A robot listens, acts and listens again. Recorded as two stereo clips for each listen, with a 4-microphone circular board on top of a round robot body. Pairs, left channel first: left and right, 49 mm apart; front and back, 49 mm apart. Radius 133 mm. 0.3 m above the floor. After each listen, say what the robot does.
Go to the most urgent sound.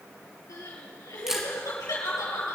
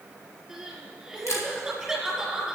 Turn 95° left.
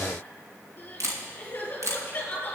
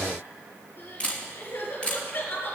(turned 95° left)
Turn 35° left.
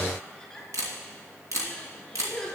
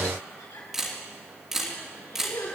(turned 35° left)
Turn 10° left.
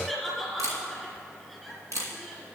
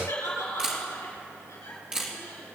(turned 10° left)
Drive 1.0 m forward.
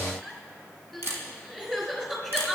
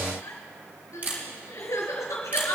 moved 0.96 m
Drive 1.0 m forward.
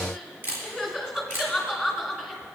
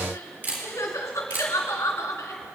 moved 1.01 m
Drive 1.0 m forward.
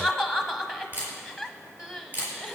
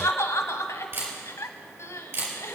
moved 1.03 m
Drive 1.0 m forward.
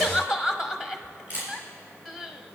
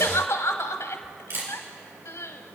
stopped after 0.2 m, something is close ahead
Turn 10° right.
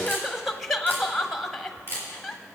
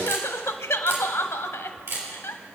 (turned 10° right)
Arrived at the crying, straight ahead.